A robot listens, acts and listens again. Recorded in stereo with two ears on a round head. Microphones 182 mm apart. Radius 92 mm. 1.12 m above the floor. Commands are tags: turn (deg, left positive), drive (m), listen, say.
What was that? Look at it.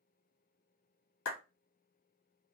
<turn deg="75"/>
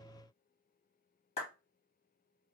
<turn deg="30"/>
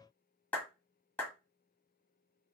<say>Facing the clap, 1 to 2 m away.</say>